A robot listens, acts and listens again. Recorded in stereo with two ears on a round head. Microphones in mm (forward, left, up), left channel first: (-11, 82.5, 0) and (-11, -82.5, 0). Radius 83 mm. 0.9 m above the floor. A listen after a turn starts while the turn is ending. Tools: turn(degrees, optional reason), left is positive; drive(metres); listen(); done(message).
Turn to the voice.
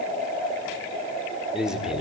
turn(degrees=-30)
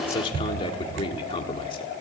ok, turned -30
turn(degrees=25, reason="So it is at 25° left.")
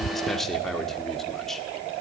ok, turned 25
done("Facing the man speaking.")